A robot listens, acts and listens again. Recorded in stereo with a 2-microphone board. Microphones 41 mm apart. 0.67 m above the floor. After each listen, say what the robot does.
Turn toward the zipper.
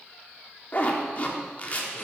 Turn 35° left.
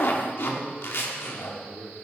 Turn 100° left.
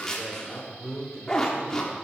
Turn 20° left.
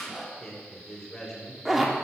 Facing the zipper, 1 to 2 m away.